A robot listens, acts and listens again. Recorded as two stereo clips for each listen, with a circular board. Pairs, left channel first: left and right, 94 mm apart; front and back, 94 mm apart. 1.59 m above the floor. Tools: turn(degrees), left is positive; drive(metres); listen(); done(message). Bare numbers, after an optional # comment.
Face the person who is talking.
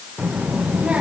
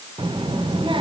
# The child speaking: 165° right.
turn(-165)
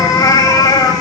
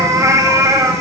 listen()
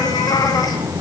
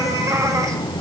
# The child speaking is now 35° right.
turn(-35)
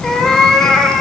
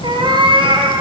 # The child speaking is now 10° left.
turn(10)
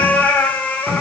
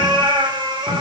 done("Facing the child speaking, under 1 m away.")